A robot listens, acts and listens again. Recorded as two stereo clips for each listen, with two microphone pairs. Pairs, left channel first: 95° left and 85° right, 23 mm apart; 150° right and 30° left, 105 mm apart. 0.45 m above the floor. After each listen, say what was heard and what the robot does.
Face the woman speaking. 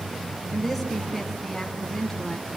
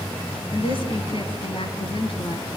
The woman speaking: 175° left. Turn 175° left.
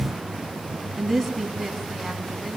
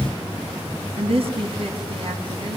Found it: a woman speaking, straight ahead, 2 to 4 m away.